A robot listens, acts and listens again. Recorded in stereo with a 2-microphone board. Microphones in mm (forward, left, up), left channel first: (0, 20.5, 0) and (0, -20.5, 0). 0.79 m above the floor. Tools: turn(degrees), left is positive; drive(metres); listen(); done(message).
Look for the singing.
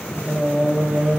turn(degrees=-40)
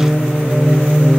turn(degrees=-15)
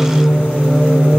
turn(degrees=-25)
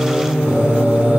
turn(degrees=-40)
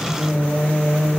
turn(degrees=-20)
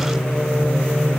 done("Facing the singing, 1 to 2 m away.")